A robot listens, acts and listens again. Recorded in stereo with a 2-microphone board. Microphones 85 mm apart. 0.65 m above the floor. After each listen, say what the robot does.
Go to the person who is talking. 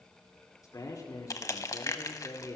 Turn 40° left.
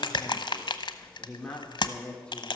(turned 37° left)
Turn 10° left.
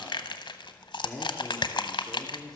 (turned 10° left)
Drive 1.0 m forward.
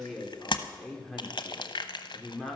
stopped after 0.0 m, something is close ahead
Blocked. The man speaking is further on, straight ahead.